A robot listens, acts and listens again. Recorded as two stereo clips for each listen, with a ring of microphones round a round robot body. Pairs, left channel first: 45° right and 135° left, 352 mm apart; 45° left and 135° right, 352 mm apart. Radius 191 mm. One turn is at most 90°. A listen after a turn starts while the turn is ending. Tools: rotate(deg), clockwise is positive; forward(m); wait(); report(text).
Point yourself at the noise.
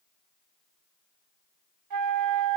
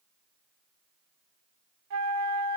rotate(-90)
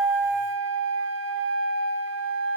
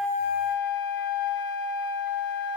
rotate(-80)
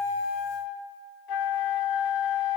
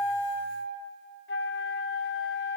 rotate(15)
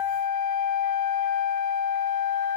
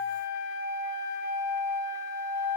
report("Found it: a flute, straight ahead, under 1 m away.")